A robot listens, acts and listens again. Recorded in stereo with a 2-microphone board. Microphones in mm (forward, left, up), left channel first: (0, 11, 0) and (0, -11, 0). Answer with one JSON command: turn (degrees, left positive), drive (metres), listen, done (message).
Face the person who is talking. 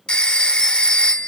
{"listen": true}
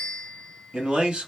{"turn": -60}
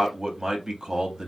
{"turn": -30}
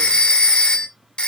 {"listen": true}
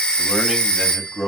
{"turn": -10}
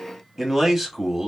{"done": "Found it: a man speaking, straight ahead."}